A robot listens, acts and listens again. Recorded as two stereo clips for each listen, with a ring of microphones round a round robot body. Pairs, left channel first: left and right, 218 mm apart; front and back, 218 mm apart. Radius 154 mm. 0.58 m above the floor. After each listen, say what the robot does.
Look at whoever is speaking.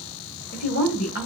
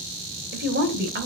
Turn 140° left.
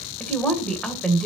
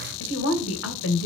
Found it: a woman speaking, straight ahead.